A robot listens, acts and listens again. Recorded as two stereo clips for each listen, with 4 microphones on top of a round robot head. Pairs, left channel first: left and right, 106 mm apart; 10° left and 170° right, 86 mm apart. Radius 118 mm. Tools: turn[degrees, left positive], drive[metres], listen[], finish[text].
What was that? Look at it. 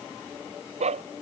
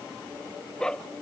Thought: The dog barking: 70° right.
Action: turn[-70]
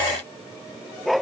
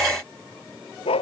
Action: finish[Facing the dog barking.]